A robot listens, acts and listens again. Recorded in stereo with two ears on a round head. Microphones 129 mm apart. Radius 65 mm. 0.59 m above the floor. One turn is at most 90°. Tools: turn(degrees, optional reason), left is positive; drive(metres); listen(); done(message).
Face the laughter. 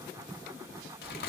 listen()
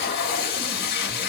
listen()
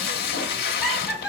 turn(degrees=20, reason="The laughter: about 20° left or 160° left.")
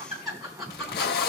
done("Found it: laughter, straight ahead, over 4 m away.")